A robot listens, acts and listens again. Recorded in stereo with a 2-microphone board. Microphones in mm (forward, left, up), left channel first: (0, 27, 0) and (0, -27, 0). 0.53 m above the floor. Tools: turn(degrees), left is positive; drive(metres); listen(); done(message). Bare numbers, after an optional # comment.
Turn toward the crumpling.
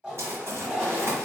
# The crumpling: about 60° right or 120° right.
turn(-60)
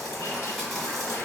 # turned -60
done("Found it: crumpling, straight ahead.")